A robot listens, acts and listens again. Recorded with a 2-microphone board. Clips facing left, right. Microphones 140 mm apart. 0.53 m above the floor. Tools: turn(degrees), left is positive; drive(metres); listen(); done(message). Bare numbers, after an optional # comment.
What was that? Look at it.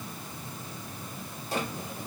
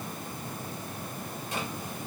# The drawer: about 35° left or 145° left.
turn(35)
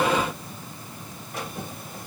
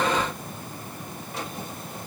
done("Found it: a drawer, straight ahead.")